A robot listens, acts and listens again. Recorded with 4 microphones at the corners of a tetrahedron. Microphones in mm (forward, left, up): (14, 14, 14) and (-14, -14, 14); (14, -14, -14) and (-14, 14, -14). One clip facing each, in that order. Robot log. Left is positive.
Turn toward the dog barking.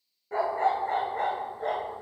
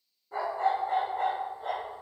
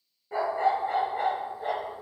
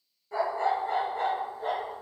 note: The dog barking: 35° left.
cmd yaw +35
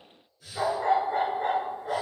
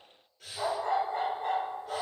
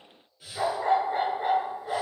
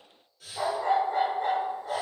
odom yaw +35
note: The dog barking is now 30° left.
cmd yaw +30
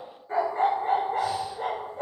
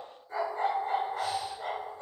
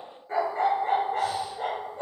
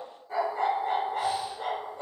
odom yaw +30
note: The dog barking is now 15° left.
cmd yaw +15
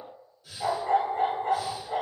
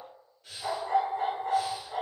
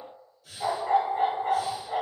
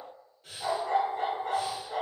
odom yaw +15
end: Found it: a dog barking, straight ahead, 1 to 2 m away.